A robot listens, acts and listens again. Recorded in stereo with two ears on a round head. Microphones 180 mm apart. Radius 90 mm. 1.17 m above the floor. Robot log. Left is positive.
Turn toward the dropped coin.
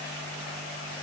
cmd idle
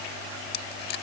note: The dropped coin: about 50° left or 130° left.
cmd yaw +50
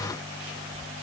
cmd idle
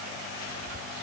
end: I heard a dropped coin, but can't make it out now. It was about straight ahead or 80° left.